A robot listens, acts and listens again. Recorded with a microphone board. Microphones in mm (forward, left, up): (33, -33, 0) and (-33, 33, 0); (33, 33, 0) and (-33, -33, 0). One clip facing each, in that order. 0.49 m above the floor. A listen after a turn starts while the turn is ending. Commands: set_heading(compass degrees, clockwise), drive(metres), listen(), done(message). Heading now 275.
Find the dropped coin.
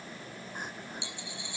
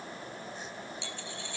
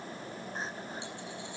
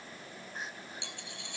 set_heading(35)
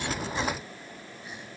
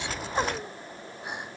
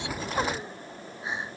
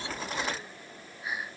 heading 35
done("I heard a dropped coin from this way, but can't make it out now.")